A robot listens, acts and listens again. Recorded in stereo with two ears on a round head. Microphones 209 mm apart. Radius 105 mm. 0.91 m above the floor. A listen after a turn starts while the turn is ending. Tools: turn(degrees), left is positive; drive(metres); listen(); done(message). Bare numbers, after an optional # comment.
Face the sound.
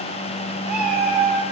turn(-30)
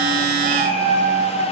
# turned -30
# So it is at 145° right.
turn(-145)
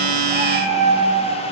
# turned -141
done("Found it: a cat meowing, straight ahead.")